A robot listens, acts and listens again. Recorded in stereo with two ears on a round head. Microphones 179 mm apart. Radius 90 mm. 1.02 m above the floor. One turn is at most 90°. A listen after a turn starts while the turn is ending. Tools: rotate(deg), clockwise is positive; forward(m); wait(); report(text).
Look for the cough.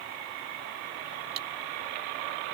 wait()
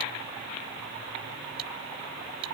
wait()
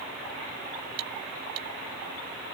report("I can't make out a cough to turn to.")